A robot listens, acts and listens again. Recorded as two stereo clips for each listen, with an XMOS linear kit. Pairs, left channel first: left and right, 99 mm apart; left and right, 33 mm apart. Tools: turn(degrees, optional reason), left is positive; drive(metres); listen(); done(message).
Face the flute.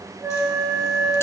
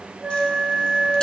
turn(degrees=-30, reason="The flute: about 30° right or 150° right.")
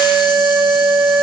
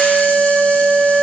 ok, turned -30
done("Facing the flute, 2 to 4 m away.")